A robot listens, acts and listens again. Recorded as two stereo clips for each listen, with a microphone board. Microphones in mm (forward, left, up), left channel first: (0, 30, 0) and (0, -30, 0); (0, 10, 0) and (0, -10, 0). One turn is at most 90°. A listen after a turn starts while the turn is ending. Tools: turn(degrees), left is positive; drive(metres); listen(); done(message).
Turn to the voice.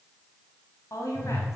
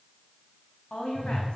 turn(degrees=60)
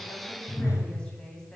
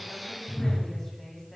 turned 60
turn(degrees=15)
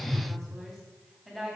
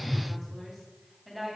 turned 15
done("Facing the woman speaking, 2 to 4 m away.")